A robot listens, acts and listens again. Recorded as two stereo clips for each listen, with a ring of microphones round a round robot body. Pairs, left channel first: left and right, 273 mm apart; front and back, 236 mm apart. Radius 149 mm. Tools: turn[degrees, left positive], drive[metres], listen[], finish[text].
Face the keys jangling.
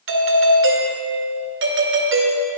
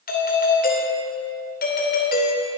Action: listen[]
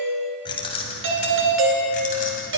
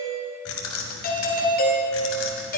Thought: The keys jangling: 30° left.
Action: turn[30]
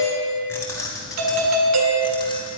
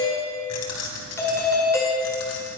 Thought: The keys jangling is now 10° left.
Action: turn[10]
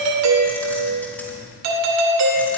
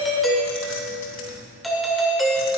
Action: finish[Facing the keys jangling.]